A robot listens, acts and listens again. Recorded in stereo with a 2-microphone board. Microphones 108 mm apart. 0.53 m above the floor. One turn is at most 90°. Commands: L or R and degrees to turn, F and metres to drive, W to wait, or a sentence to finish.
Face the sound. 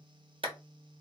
R55
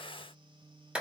R10
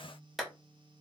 Found it: a clap, straight ahead, 1 to 2 m away.